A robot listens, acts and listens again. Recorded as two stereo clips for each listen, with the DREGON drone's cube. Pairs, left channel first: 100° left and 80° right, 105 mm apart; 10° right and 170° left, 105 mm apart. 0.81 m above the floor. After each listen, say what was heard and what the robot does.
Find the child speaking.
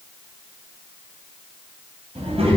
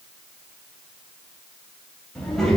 The child speaking: 95° right. Turn 95° right.
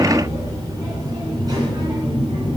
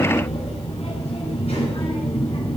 The child speaking is now 35° right. Turn 35° right.
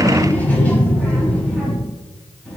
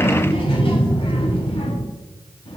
The child speaking is now 20° left. Turn 20° left.
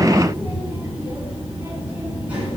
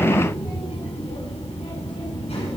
Facing the child speaking, over 4 m away.